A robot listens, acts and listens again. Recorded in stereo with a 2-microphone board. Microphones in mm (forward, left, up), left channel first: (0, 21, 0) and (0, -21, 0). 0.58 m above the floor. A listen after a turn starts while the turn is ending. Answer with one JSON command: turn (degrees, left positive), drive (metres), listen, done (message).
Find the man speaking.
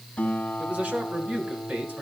{"turn": -45}
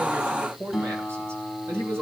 {"turn": -100}
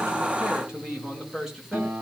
{"turn": -10}
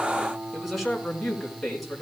{"done": "Found it: a man speaking, straight ahead."}